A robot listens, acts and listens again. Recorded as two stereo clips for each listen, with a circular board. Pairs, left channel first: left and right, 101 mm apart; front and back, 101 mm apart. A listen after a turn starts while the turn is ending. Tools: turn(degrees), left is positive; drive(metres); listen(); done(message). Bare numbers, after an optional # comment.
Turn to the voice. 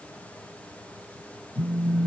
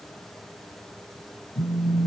listen()
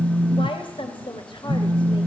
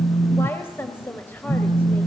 # The woman speaking: 65° left.
turn(65)
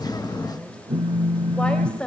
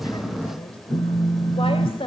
# The woman speaking is now 10° left.
turn(10)
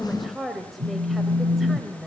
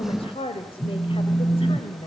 done("Facing the woman speaking.")